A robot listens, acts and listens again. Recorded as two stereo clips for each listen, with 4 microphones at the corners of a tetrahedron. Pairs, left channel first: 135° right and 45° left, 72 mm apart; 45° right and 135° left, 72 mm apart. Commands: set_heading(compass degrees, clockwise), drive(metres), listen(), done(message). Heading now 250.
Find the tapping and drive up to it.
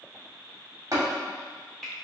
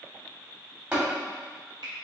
set_heading(175)
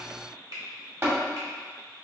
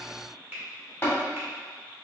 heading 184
set_heading(174)
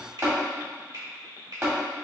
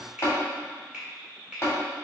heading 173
drive(1.0)
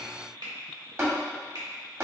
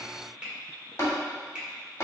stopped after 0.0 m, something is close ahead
done("Blocked. The tapping is further on, straight ahead.")